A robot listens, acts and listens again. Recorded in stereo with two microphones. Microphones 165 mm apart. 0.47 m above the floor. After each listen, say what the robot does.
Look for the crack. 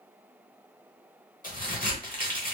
Turn 55° left.
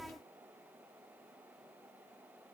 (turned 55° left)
Keep listening.
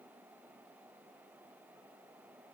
I heard a crack, but can't make it out now. It was about straight ahead or 70° left.